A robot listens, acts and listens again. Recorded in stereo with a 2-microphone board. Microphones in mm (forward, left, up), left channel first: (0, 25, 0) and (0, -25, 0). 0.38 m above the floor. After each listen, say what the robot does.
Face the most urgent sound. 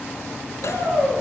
Turn 65° right.
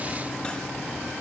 Keep listening.
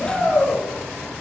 Facing the shout, over 4 m away.